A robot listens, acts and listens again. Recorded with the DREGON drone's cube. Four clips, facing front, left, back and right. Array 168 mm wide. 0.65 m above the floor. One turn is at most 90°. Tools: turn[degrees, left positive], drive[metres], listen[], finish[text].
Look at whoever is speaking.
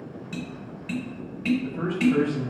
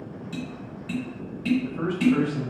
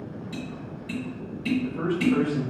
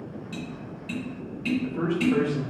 Thought: The man speaking: 75° right.
Action: turn[-75]
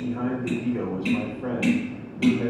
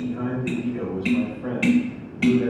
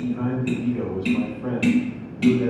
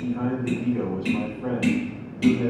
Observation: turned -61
Thought: The man speaking is now 15° right.
Action: turn[-15]
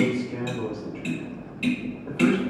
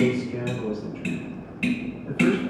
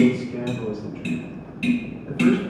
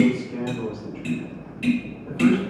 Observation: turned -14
Action: finish[Facing the man speaking, 1 to 2 m away.]